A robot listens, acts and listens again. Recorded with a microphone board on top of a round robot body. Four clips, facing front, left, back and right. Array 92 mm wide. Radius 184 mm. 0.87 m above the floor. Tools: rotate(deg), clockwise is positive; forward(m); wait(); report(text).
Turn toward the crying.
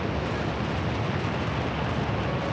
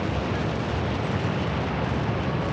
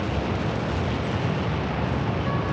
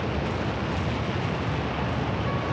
wait()
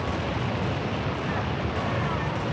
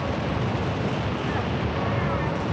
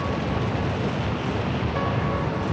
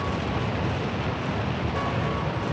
wait()
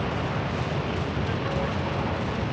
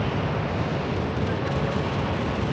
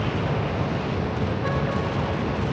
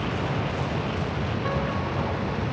report("I can't make out crying.")